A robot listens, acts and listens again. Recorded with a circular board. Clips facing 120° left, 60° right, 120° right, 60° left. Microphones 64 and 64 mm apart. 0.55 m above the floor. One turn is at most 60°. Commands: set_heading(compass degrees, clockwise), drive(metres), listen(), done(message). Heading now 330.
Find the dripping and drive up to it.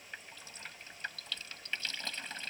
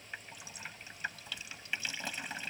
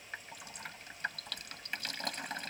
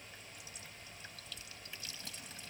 set_heading(30)
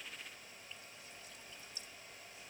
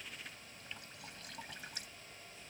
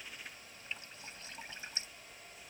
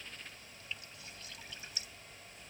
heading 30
set_heading(90)
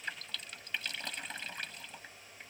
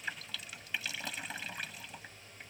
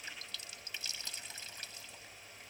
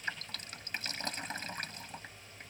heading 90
set_heading(65)
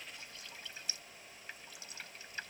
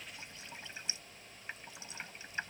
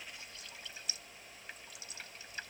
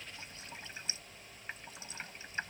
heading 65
drive(1.0)
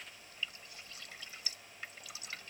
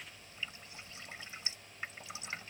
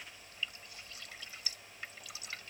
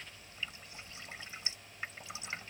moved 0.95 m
drive(1.0)
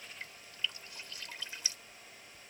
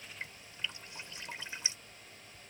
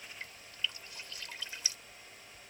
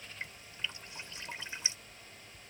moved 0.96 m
drive(1.0)
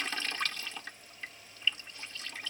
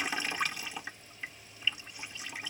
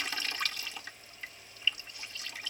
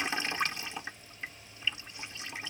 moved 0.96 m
set_heading(55)
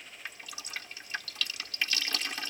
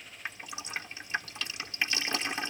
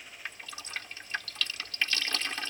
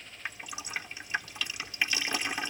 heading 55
drive(1.0)
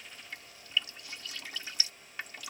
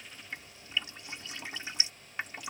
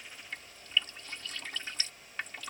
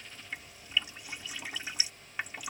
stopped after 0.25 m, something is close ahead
set_heading(65)
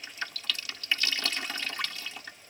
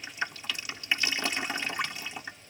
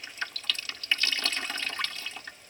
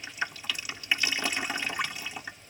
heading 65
done("Arrived at the dripping, straight ahead.")